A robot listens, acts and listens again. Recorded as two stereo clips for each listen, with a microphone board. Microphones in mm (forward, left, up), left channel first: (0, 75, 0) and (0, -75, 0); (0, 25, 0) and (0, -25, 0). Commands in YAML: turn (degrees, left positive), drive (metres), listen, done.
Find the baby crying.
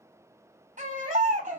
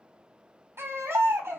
turn: -60
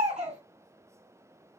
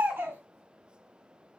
turn: -55
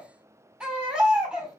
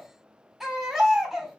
turn: -10
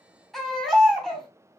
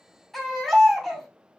done: "Facing the baby crying."